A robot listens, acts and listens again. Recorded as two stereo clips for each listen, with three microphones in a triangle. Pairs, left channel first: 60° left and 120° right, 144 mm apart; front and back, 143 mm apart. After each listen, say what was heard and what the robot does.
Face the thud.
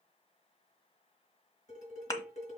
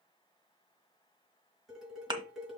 The thud: 125° left. Turn 125° left.
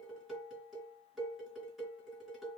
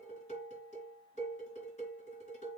Facing where the thud came from. I can't hear it now.